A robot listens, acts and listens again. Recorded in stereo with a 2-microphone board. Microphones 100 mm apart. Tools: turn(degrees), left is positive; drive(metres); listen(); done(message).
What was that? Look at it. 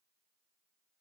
listen()
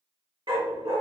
turn(degrees=-65)
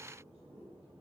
listen()
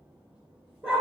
turn(degrees=-10)
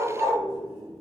done("Facing the dog barking.")